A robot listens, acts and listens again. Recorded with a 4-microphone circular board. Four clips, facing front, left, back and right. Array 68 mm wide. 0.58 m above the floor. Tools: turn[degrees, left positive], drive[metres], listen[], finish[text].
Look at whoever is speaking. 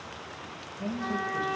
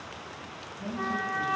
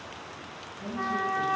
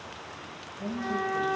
Thought: The man speaking: 30° right.
Action: turn[-30]
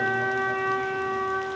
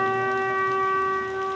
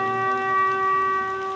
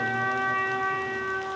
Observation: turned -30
Action: listen[]
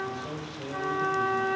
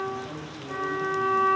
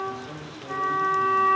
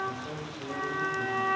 Thought: The man speaking is now 10° right.
Action: turn[-10]
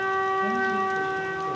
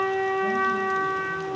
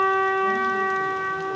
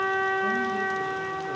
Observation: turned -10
Action: listen[]
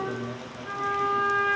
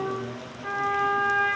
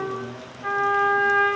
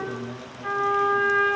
Action: finish[Found it: a man speaking, straight ahead, 2 to 4 m away.]